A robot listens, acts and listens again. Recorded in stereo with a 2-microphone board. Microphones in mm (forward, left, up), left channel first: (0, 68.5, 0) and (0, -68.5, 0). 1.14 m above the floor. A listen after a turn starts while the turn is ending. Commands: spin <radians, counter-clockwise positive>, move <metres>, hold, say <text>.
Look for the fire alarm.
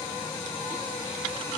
hold
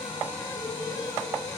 hold
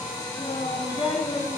say I can't make out a fire alarm, only a child speaking.